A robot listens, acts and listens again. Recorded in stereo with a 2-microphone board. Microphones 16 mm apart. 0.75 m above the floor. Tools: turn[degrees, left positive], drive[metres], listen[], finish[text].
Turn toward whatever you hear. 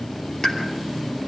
Thought: The pop: about 40° left or 140° left.
Action: turn[40]
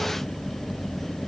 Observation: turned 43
Action: listen[]
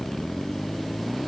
Action: finish[I heard a pop, but can't make it out now. It was about 5° right or 100° left.]